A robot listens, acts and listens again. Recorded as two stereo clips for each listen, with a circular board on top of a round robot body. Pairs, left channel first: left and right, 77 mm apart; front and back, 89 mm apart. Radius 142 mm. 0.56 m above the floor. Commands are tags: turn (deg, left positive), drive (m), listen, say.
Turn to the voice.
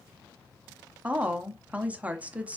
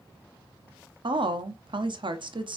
<turn deg="-160"/>
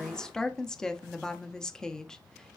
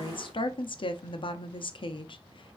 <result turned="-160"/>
<turn deg="10"/>
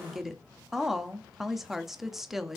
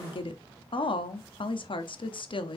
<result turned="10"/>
<say>Facing the woman speaking.</say>